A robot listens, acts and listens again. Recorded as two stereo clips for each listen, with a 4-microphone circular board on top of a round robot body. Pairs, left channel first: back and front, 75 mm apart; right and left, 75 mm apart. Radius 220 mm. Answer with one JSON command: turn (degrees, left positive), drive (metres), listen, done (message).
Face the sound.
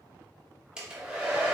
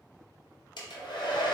{"turn": -80}
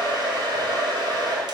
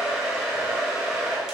{"done": "Found it: a hair dryer, straight ahead, under 1 m away."}